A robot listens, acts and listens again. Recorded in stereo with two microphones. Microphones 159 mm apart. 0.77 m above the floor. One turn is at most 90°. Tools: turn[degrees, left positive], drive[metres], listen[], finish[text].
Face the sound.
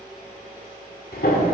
Action: turn[90]
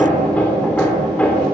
Thought: So it is at 10° left.
Action: turn[10]
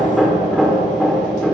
Action: finish[Found it: hammering, straight ahead, 1 to 2 m away.]